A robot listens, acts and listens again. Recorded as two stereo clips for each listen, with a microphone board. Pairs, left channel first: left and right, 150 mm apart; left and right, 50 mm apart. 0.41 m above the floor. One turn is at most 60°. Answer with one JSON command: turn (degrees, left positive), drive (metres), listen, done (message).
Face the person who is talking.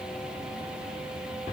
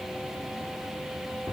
{"listen": true}
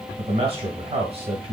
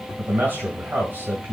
{"turn": -45}
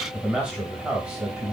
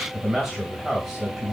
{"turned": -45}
{"turn": -10}
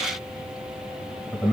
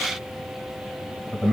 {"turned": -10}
{"done": "Found it: a man speaking, straight ahead."}